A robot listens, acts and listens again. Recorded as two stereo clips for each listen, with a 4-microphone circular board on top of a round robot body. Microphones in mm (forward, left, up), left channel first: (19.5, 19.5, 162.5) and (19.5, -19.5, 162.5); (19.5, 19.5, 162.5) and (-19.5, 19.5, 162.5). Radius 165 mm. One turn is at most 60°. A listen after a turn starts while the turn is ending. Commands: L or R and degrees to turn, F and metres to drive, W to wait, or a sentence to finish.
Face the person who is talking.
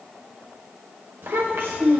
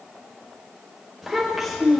R60
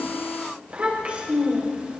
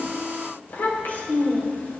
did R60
R30
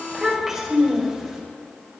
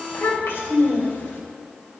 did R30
Facing the child speaking.